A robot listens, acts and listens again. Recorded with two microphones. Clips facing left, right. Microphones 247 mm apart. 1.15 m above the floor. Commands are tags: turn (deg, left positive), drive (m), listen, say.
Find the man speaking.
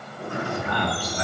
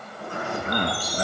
<turn deg="-40"/>
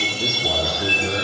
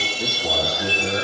<say>Found it: a man speaking, straight ahead, 2 to 4 m away.</say>